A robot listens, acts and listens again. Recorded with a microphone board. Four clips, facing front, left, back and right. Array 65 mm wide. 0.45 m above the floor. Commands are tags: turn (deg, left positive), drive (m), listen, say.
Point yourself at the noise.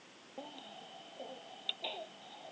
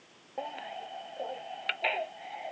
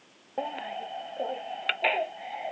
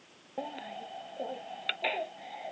<turn deg="170"/>
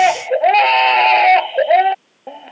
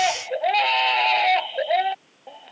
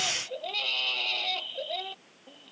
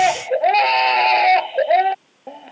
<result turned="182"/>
<turn deg="-10"/>
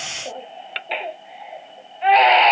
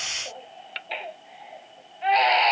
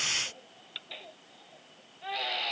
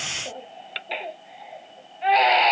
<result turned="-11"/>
<say>Facing the baby crying.</say>